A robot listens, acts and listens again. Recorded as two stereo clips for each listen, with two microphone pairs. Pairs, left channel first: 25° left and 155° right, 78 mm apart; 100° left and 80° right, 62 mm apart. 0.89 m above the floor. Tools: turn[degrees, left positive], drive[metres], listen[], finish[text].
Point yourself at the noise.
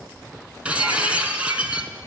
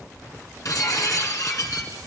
Thought: The breaking glass: 130° left.
Action: turn[130]
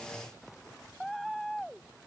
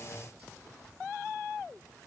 Action: finish[Facing where the breaking glass came from. I can't hear it now.]